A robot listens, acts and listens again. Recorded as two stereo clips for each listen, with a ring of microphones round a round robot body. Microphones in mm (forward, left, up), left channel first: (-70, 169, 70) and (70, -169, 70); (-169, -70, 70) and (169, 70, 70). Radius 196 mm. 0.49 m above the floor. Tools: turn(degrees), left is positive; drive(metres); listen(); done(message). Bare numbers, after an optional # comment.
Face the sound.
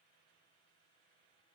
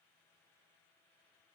listen()
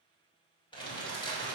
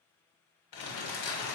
# The crumpling: 170° right.
turn(-170)
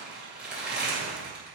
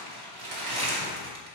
# The crumpling is now 20° left.
turn(20)
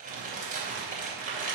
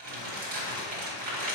done("Found it: crumpling, straight ahead, 2 to 4 m away.")